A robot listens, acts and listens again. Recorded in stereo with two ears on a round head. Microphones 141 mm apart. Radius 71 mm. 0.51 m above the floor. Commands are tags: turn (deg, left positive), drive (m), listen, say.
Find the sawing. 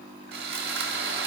<turn deg="-65"/>
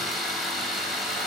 <say>Facing the sawing.</say>